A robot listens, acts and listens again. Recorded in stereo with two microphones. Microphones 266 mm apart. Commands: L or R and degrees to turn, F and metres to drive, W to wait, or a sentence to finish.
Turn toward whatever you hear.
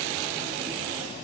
W
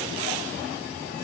W
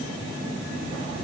I can't make out anything to turn to.